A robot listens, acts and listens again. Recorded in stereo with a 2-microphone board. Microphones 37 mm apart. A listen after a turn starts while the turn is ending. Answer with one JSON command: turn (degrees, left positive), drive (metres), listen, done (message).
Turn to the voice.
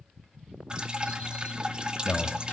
{"turn": 70}
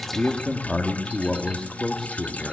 {"done": "Facing the man speaking, 2 to 4 m away."}